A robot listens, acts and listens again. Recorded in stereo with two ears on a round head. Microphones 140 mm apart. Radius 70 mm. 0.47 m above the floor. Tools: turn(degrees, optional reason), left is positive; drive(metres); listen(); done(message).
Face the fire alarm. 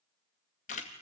listen()
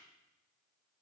listen()
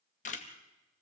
done("I can't make out a fire alarm, only a camera shutter.")